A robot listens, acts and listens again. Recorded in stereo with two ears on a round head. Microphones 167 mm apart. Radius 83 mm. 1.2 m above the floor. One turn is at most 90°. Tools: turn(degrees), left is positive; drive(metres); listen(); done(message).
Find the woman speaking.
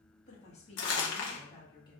turn(degrees=25)
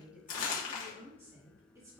turn(degrees=-20)
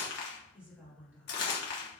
turn(degrees=-10)
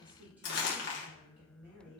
turn(degrees=-10)
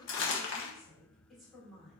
done("Found it: a woman speaking, straight ahead, 2 to 4 m away.")